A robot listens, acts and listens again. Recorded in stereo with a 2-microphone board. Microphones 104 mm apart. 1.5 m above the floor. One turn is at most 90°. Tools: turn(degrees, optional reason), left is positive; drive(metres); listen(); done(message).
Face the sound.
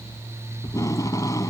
turn(degrees=30, reason="The tape being pulled: about 30° left or 150° left.")
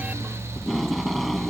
done("Found it: tape being pulled, straight ahead.")